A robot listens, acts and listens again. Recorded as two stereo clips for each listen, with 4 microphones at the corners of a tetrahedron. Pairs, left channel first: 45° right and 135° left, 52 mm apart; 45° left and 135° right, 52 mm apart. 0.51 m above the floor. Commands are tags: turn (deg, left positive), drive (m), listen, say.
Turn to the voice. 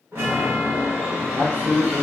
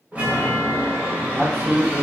<turn deg="130"/>
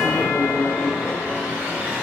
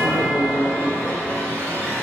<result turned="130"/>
<listen/>
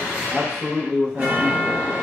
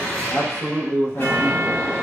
<turn deg="55"/>
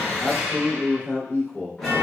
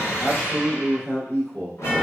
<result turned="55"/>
<say>Found it: a man speaking, straight ahead, 1 to 2 m away.</say>